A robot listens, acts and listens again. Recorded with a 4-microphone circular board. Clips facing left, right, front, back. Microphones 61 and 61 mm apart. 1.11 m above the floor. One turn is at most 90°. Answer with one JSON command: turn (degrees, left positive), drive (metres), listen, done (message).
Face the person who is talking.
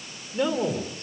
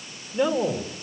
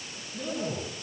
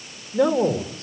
{"turn": -90}
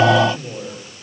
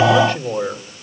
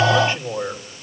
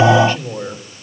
{"turn": -75}
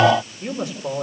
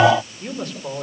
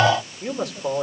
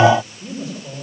{"done": "Found it: a man speaking, straight ahead, 2 to 4 m away."}